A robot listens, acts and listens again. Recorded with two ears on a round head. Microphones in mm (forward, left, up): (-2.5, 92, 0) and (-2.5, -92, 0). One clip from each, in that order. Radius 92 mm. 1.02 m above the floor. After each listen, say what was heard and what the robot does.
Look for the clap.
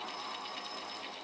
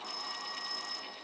Keep listening.
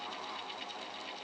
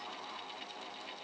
Keep listening.
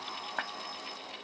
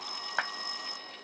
The clap: about 40° right or 140° right. Turn 40° right.
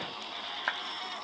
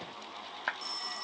Facing the clap.